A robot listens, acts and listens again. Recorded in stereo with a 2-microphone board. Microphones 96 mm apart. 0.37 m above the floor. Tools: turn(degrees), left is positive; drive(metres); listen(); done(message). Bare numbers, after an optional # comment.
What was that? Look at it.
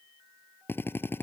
# The drill: about 25° left or 155° left.
turn(25)
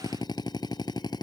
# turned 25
# So it is at 130° left.
turn(130)
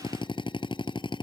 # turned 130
# The drill is now 55° left.
turn(55)
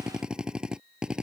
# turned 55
# The drill is now 10° right.
turn(-10)
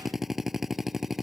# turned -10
done("Found it: a drill, straight ahead.")